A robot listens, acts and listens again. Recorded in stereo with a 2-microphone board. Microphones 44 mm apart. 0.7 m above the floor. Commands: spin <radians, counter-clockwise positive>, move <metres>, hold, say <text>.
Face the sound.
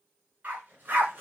spin -0.61
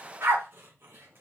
spin -2.01
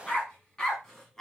spin 0.17
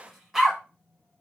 say Facing the dog barking, 1 to 2 m away.